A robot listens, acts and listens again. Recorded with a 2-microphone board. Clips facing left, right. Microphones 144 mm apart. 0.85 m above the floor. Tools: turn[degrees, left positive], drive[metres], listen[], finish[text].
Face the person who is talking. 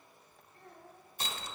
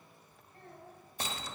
Thought: The child speaking: about 65° right or 115° right.
Action: turn[-65]
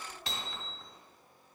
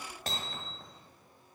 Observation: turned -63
Action: listen[]
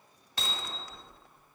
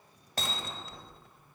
Action: listen[]
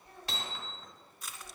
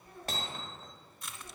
Action: finish[I heard a child speaking, but can't make it out now. It was about 5° right or 50° right.]